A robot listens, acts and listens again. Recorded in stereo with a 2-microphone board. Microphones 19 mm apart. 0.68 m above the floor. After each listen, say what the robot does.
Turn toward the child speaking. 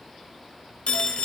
Keep listening.
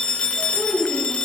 Turn 25° left.
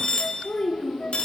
Turn 125° left.
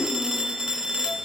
Keep listening.
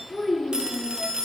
Found it: a child speaking, straight ahead.